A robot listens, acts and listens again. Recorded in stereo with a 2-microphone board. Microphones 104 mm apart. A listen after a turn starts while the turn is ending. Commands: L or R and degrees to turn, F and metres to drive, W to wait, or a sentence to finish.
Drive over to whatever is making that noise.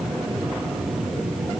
W
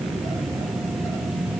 W
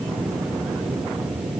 I can't make out anything to turn to.